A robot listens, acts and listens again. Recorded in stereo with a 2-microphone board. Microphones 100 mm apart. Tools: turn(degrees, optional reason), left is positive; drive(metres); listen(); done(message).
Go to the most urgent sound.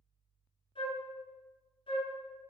listen()
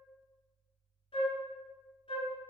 listen()
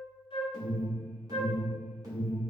turn(degrees=-35, reason="The alarm: about 35° right or 145° right.")
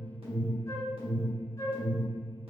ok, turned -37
turn(degrees=-105, reason="So it is at 105° right.")
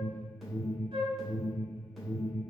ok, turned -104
drive(metres=1.0)
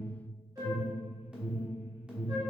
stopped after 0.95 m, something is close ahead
turn(degrees=-10, reason="The alarm is now 10° right.")
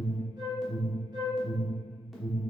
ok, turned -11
done("I am next to the alarm.")